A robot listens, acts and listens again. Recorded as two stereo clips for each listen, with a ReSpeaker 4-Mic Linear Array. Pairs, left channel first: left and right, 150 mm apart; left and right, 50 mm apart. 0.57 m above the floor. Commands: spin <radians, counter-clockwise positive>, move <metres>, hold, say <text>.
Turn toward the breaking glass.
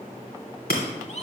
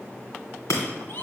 spin 1.57
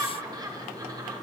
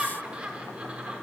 say Facing where the breaking glass came from. I can't hear it now.